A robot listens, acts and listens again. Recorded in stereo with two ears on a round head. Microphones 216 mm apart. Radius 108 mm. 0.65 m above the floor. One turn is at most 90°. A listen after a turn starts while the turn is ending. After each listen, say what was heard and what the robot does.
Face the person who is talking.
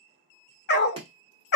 Keep listening.
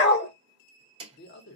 The man speaking: about 45° left or 135° left. Turn 45° left.
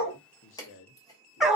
So it is at 75° left. Turn 75° left.
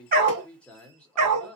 Found it: a man speaking, straight ahead.